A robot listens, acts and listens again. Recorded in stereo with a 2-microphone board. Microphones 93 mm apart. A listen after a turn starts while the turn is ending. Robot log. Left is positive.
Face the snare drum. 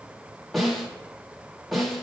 cmd yaw +30
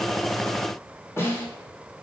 note: So it is at 150° left.
cmd yaw +150
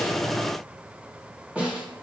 note: The snare drum is now 15° right.
cmd yaw -15
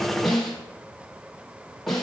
end: Facing the snare drum, 1 to 2 m away.